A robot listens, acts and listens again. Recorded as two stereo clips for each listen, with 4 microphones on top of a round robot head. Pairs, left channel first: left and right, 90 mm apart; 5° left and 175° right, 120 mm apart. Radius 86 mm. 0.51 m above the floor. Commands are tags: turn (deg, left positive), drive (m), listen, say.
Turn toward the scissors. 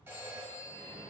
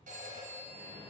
<listen/>
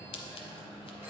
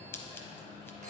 <turn deg="75"/>
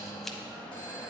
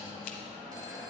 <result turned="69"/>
<listen/>
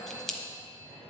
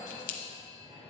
<say>Found it: scissors, straight ahead, under 1 m away.</say>